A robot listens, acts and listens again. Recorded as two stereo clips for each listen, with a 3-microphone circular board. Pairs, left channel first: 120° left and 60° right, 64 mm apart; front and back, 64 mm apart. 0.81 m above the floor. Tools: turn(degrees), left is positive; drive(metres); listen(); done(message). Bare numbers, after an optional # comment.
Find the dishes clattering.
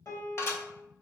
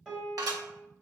# The dishes clattering: 165° left.
turn(165)
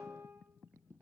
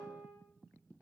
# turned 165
listen()
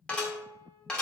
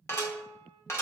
# The dishes clattering is now 50° left.
turn(50)
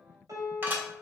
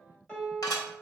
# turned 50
done("Found it: dishes clattering, straight ahead.")